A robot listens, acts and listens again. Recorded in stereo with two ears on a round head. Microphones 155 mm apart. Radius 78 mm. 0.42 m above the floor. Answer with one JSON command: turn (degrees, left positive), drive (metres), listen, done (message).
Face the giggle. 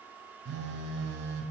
{"listen": true}
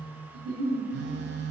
{"turn": -45}
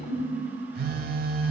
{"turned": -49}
{"done": "Facing the giggle, 2 to 4 m away."}